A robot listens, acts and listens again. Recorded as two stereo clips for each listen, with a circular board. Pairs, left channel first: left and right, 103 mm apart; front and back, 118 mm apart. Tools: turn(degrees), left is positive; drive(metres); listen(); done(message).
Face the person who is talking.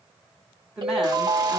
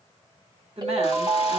turn(degrees=-170)
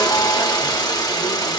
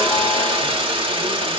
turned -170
listen()
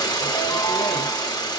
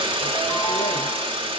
listen()
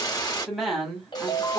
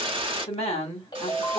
done("Found it: a woman speaking, straight ahead, 1 to 2 m away.")